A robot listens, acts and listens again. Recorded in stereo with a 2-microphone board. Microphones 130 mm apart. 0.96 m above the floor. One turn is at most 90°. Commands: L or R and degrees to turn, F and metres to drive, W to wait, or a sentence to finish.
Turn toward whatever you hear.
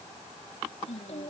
L55
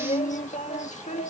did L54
L65
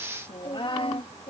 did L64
L45
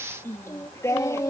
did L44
L25
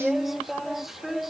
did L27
Facing the singing.